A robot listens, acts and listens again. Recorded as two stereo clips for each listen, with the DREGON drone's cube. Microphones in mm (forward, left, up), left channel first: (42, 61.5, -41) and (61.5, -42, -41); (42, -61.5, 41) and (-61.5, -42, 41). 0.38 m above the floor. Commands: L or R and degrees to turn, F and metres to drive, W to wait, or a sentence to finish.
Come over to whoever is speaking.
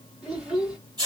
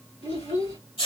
F1.0
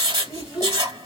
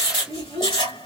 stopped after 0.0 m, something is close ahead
Something is in my way. I am facing the child speaking but have not reached it.